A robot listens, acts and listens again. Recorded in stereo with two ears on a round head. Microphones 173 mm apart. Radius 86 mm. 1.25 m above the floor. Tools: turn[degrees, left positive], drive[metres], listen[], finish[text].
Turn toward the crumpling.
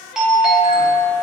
Action: listen[]
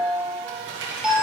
Thought: The crumpling: about 65° right or 115° right.
Action: turn[-65]
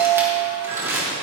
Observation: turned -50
Thought: So it is at 15° right.
Action: turn[-15]
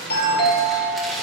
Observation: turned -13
Action: finish[Found it: crumpling, straight ahead.]